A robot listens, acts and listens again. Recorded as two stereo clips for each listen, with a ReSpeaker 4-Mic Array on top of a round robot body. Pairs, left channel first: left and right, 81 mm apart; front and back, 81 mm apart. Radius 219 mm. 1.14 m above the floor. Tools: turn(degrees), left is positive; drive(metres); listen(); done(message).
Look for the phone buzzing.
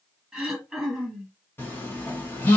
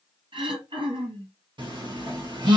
turn(degrees=155)
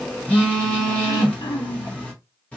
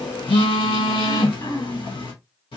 turn(degrees=15)
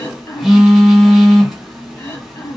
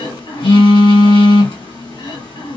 done("Facing the phone buzzing, under 1 m away.")